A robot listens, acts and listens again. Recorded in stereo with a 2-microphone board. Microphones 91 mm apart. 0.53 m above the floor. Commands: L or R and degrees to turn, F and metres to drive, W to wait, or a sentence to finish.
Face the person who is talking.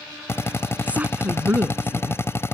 R20
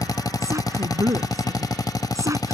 R145
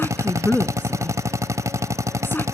L25
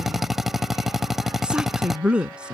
R10
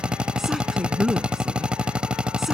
Facing the woman speaking.